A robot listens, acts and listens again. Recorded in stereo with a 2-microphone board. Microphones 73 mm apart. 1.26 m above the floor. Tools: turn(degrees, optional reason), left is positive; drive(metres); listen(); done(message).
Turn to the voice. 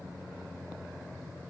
listen()
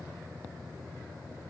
listen()
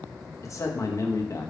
turn(degrees=45, reason="The man speaking: about 45° left or 135° left.")
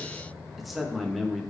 done("Found it: a man speaking, straight ahead, 1 to 2 m away.")